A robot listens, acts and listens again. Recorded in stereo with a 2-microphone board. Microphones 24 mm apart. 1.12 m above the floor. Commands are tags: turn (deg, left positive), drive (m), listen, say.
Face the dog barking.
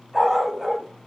<turn deg="-20"/>
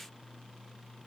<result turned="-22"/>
<listen/>
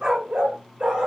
<turn deg="-125"/>
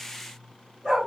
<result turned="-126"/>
<say>Facing the dog barking, over 4 m away.</say>